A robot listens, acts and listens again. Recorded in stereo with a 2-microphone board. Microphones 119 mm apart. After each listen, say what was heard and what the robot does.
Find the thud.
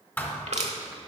The thud: about 15° left or 165° left. Turn 15° left.
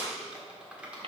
Keep listening.
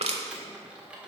I heard a thud, but can't make it out now. It was about straight ahead or 150° left.